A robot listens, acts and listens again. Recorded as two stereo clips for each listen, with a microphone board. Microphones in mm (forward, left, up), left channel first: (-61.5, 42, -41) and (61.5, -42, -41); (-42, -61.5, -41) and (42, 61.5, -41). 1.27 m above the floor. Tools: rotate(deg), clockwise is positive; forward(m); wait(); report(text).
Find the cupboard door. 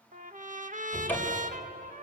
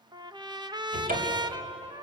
rotate(-70)
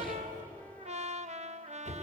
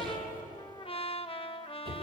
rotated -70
report("Facing the cupboard door, 2 to 4 m away.")